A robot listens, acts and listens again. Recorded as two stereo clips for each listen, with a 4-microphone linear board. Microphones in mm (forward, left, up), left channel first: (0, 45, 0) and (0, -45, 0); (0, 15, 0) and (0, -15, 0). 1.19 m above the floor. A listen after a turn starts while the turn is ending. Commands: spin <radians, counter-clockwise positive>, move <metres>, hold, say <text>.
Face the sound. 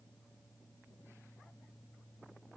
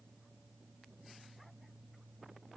hold
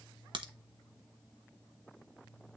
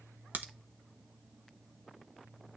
spin -1.13
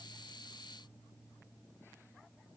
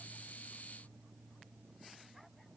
hold
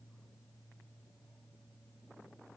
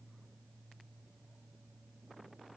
say I heard a crack, but can't make it out now. It was about straight ahead or 50° right.